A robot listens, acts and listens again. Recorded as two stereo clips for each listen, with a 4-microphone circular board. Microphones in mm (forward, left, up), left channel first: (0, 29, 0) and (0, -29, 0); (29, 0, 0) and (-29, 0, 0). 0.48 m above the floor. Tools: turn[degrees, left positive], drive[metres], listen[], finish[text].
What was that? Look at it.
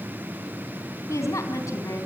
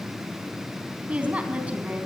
Thought: The woman speaking: 110° left.
Action: turn[110]
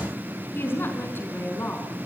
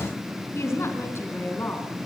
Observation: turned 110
Thought: The woman speaking is now 40° left.
Action: turn[40]
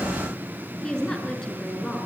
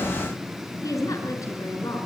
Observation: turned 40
Thought: The woman speaking is now 10° left.
Action: turn[10]
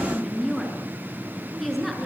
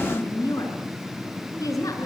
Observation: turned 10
Action: finish[Found it: a woman speaking, straight ahead, over 4 m away.]